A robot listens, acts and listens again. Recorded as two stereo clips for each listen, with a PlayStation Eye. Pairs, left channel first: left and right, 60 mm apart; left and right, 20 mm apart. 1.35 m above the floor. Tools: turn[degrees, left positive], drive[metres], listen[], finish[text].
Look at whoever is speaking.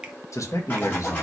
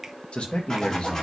Thought: The man speaking: about 60° left or 120° left.
Action: turn[60]
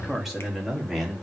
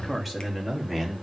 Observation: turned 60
Action: finish[Facing the man speaking, 2 to 4 m away.]